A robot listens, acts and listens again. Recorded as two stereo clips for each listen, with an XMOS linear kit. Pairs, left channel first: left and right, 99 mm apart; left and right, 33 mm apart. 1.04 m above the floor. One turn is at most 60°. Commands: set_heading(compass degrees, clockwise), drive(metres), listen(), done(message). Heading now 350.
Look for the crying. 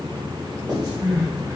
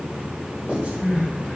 set_heading(25)
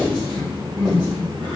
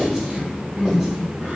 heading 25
set_heading(85)
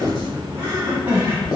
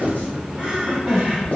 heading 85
set_heading(115)
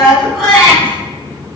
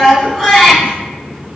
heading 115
done("Facing the crying, 1 to 2 m away.")